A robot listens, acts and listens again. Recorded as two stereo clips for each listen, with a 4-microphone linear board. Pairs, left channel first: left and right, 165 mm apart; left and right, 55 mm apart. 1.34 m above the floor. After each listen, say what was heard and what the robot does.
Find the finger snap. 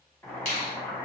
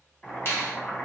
The finger snap: about 50° left or 130° left. Turn 50° left.
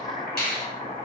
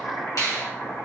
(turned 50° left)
So it is at 85° left. Turn 85° left.
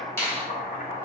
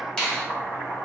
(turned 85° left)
The finger snap is now 15° left. Turn 15° left.
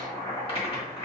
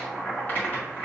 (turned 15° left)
Keep listening.
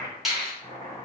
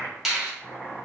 Facing the finger snap.